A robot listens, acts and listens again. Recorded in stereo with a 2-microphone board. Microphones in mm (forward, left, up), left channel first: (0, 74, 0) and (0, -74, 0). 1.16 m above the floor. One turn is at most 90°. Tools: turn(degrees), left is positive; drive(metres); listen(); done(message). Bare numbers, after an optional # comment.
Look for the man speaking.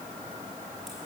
listen()
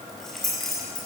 listen()
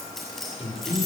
# The man speaking: about 45° left or 135° left.
turn(45)
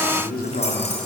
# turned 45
# So it is at 95° left.
turn(90)
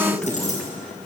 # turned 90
done("Facing the man speaking, 2 to 4 m away.")